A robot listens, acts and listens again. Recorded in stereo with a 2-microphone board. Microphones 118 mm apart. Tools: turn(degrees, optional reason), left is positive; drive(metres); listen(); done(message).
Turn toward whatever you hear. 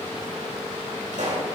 turn(degrees=-90)
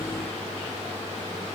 done("Facing where the pop came from. I can't hear it now.")